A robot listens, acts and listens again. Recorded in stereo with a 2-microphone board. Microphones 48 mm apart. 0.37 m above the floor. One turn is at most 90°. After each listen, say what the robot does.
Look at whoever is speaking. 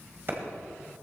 Keep listening.
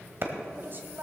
Turn 45° right.
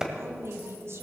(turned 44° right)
Turn 85° right.
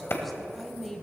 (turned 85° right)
Found it: a woman speaking, straight ahead.